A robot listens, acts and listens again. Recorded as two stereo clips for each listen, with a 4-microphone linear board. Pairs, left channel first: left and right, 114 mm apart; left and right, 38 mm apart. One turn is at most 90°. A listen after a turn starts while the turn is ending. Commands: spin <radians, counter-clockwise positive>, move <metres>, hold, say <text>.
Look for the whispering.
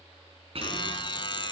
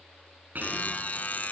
spin -0.96
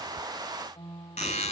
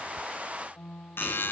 hold
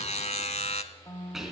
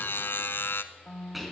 say Found it: whispering, straight ahead, 2 to 4 m away.